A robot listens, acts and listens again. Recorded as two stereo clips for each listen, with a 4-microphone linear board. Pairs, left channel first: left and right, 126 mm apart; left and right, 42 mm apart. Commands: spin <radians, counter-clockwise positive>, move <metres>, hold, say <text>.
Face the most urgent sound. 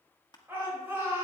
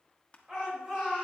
spin -0.35
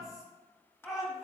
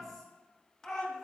say Facing the shout, 2 to 4 m away.